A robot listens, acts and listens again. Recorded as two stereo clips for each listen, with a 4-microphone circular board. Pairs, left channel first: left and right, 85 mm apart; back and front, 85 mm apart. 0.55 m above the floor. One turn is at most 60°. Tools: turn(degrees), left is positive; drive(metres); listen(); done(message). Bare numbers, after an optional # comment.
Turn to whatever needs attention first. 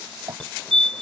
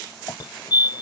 # The fire alarm: 170° left.
turn(60)
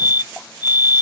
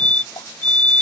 # The fire alarm is now 110° left.
turn(60)
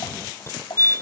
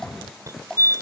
# The fire alarm is now 45° left.
turn(45)
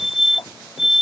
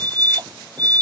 done("Found it: a fire alarm, straight ahead.")